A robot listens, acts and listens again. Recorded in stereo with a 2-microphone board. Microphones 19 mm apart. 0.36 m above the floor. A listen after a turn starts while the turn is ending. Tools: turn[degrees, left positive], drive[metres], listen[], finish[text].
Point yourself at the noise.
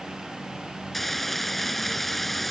Action: turn[30]
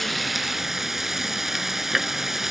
Thought: So it is at 15° right.
Action: turn[-15]
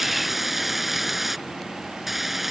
Thought: The frying is now 10° right.
Action: turn[-10]
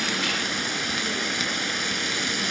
Action: finish[Facing the frying.]